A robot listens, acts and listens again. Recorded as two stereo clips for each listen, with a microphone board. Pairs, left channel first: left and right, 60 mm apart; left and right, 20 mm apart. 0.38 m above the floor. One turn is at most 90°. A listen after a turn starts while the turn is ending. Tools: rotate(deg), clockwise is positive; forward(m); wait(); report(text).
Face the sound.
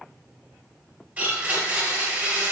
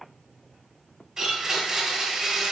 rotate(25)
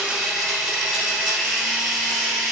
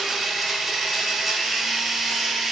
report("Facing the blender.")